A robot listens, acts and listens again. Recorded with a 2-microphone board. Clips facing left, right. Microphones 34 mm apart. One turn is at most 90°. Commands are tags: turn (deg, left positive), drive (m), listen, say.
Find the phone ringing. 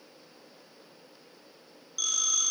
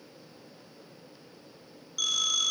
<turn deg="-30"/>
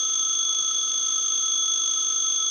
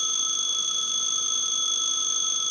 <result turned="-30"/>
<turn deg="20"/>
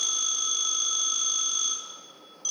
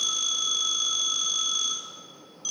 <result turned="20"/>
<say>Facing the phone ringing.</say>